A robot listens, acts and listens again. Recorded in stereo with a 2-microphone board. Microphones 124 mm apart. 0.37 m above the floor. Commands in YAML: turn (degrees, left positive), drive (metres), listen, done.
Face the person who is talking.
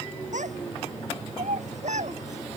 turn: -75
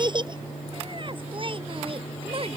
turn: -50
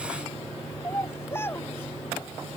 turn: 20
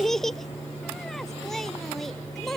done: "Found it: a child speaking, straight ahead."